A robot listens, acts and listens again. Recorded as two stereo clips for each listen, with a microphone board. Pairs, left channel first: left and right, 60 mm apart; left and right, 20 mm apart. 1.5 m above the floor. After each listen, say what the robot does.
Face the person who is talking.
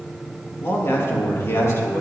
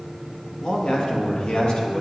Turn 55° left.
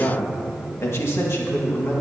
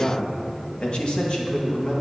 Turn 40° left.
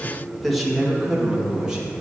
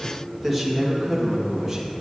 Turn 15° right.
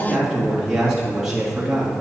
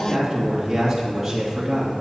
Turn 10° right.
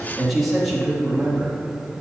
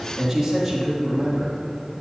Found it: a man speaking, straight ahead.